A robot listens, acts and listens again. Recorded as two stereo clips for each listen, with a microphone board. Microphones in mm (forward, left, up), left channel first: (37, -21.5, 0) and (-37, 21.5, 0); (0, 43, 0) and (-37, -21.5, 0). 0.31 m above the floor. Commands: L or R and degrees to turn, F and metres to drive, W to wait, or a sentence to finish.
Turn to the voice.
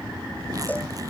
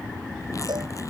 W
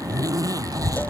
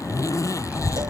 L170
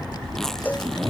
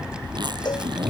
R45
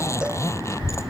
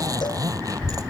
R15
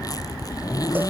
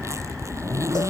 Found it: a child speaking, straight ahead.